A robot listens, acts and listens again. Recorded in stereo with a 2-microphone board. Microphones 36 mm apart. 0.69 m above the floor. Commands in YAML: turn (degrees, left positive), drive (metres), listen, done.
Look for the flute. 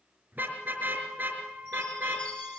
turn: -60
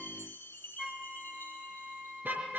turn: -15
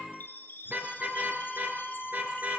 done: "Facing the flute, under 1 m away."